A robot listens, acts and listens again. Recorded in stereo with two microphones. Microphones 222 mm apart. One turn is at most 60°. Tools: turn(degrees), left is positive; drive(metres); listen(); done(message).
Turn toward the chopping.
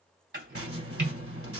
turn(degrees=-55)
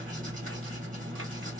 listen()
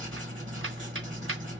listen()
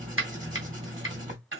turn(degrees=-60)
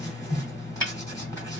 turn(degrees=-15)
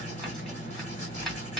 listen()
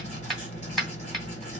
done("Facing the chopping.")